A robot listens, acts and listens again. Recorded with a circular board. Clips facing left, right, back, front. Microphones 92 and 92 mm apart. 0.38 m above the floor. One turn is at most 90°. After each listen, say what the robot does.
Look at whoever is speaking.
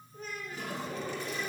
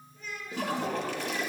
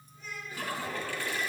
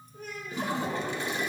Turn 40° left.
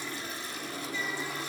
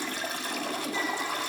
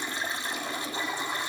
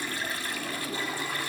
Keep listening.
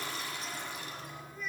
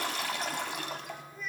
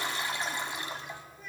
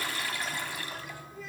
Facing the child speaking.